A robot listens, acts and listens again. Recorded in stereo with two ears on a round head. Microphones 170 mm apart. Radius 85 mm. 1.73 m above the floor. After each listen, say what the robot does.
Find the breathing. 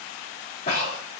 Turn 40° left.
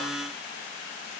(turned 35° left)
Keep listening.
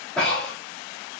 Found it: breathing, straight ahead, over 4 m away.